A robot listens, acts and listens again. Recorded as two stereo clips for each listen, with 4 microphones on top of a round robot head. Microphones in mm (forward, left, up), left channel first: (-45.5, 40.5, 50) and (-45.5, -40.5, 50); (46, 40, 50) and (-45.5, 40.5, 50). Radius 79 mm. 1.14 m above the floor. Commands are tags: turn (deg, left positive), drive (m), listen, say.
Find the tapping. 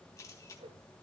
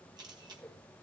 <listen/>
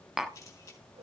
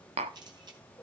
<turn deg="-175"/>
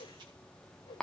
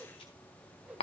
<say>Facing the tapping.</say>